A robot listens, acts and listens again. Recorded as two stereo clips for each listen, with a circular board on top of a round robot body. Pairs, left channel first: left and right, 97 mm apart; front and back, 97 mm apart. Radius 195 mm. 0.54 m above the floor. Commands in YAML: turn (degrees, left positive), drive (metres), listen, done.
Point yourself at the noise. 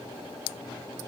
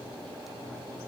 listen: true
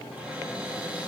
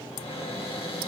turn: -15
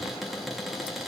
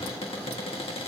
done: "Found it: a cupboard door, straight ahead, 2 to 4 m away."